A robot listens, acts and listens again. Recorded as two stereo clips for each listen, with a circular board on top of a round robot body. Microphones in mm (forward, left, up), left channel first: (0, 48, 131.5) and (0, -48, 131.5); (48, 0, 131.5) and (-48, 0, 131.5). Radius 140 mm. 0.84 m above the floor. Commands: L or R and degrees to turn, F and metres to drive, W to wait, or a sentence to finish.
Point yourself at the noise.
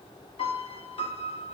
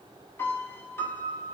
L65
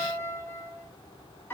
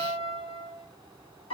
L20
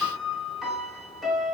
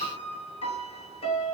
Facing the piano.